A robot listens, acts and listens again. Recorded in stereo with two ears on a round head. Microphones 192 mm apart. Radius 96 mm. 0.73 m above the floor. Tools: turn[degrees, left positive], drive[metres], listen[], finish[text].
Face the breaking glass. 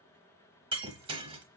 Thought: The breaking glass: about 25° right or 155° right.
Action: turn[-25]
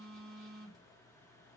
Action: listen[]
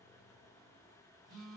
Action: finish[I heard breaking glass, but can't make it out now. It was about straight ahead or 130° right.]